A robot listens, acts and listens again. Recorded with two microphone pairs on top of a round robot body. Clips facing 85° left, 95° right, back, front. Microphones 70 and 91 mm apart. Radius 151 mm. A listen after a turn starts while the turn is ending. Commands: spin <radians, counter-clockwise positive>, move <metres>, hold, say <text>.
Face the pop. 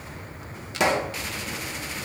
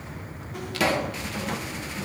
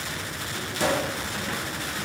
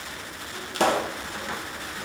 spin 0.35
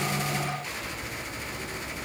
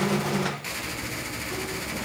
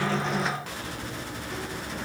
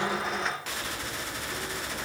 say Facing where the pop came from. I can't hear it now.